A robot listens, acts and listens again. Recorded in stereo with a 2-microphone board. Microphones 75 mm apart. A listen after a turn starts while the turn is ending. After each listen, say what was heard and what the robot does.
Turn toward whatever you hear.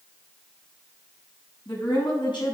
Turn 90° left.
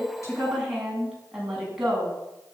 Facing the woman speaking.